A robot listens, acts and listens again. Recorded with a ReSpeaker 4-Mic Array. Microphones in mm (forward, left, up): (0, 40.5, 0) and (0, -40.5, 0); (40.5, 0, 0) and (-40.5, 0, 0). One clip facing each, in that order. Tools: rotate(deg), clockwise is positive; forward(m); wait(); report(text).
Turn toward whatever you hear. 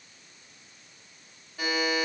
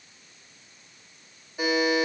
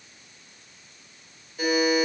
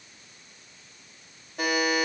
rotate(160)
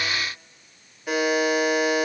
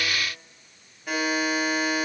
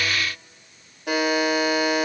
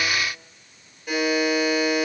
report("Facing the buzzer.")